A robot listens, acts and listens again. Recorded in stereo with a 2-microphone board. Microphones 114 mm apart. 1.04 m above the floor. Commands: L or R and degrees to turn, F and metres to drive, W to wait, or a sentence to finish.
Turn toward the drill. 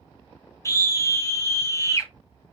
W
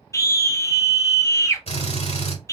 L65
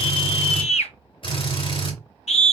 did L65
L50
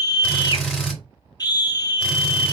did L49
Found it: a drill, straight ahead, 2 to 4 m away.